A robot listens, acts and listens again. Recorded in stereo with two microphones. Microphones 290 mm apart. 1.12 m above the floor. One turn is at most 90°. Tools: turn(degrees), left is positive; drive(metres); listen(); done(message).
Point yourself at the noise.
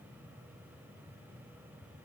listen()
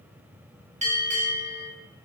turn(degrees=-25)
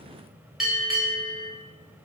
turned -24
done("Facing the bell, under 1 m away.")